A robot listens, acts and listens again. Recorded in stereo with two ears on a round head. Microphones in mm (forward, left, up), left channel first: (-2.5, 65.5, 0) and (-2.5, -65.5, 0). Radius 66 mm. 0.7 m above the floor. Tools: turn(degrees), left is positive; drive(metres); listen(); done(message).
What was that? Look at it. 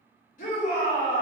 turn(degrees=60)
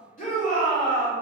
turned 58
turn(degrees=55)
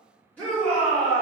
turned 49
turn(degrees=10)
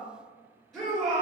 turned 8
done("Found it: a shout, straight ahead.")